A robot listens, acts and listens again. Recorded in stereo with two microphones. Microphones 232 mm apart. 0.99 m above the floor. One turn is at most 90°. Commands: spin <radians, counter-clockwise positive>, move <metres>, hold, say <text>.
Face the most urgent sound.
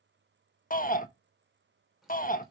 spin 0.61
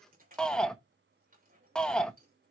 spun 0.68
say Found it: a shout, straight ahead, 1 to 2 m away.